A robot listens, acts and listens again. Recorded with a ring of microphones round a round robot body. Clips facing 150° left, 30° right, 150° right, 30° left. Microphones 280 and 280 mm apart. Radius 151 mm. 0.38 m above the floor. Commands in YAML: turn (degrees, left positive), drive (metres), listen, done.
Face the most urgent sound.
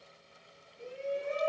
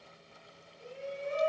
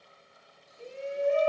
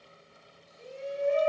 turn: 120
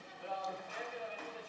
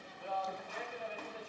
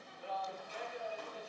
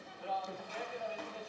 turn: 15
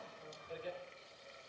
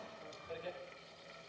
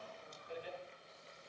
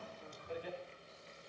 done: "Found it: a shout, straight ahead, 2 to 4 m away."